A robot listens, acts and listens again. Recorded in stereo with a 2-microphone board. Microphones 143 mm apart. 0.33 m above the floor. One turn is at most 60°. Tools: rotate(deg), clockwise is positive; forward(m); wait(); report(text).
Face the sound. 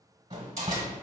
rotate(45)
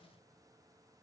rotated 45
wait()
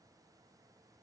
report("I heard a door slam, but can't make it out now. It was about straight ahead or 90° right.")